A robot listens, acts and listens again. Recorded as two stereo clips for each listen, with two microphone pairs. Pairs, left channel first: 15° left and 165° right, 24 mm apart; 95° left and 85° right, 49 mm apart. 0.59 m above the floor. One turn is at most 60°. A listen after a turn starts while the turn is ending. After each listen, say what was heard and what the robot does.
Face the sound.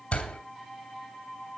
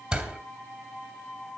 The door slam: 20° right. Turn 20° right.
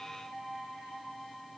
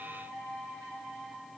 I heard a door slam from this way, but can't make it out now.